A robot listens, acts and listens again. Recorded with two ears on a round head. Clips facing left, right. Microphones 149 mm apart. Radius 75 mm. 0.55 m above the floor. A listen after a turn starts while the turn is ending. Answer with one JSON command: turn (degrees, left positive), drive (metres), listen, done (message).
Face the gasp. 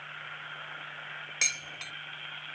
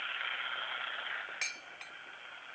{"listen": true}
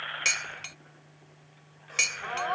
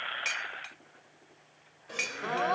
{"turn": -45}
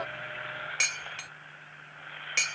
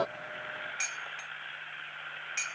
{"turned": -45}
{"listen": true}
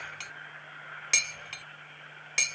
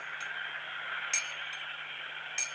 {"done": "I heard a gasp, but can't make it out now. It was about straight ahead or 90° right."}